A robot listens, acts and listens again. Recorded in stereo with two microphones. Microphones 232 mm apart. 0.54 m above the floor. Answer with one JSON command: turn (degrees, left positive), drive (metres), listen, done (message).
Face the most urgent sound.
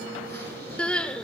{"turn": 30}
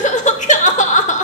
{"turn": 145}
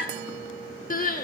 {"turn": 45}
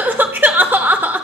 {"turn": -10}
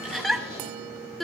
{"done": "Found it: crying, straight ahead, 1 to 2 m away."}